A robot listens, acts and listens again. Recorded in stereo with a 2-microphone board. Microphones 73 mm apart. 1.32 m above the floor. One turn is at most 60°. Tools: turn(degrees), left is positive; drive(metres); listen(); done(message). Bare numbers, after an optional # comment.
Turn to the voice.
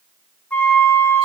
listen()
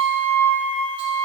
listen()
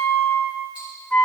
done("I can't make out anyone speaking, only a flute and ticking.")